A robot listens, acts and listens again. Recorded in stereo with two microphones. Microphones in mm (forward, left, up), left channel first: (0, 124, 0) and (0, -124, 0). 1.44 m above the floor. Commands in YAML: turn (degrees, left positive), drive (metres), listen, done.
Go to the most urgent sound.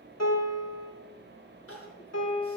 turn: 60
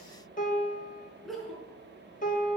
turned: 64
drive: 1.0
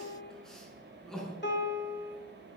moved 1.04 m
drive: 1.0
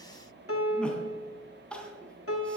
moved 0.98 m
drive: 1.0
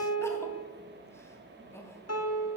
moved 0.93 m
turn: 10
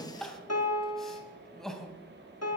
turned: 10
drive: 1.0
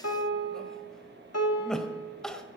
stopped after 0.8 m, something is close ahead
done: "I am next to the crying."